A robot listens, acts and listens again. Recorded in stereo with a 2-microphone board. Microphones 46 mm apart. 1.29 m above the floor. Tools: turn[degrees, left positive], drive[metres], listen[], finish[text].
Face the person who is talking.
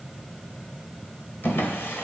Action: listen[]
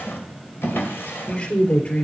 Thought: The woman speaking: about 35° left or 145° left.
Action: turn[35]
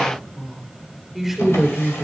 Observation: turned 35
Action: finish[Facing the woman speaking, 2 to 4 m away.]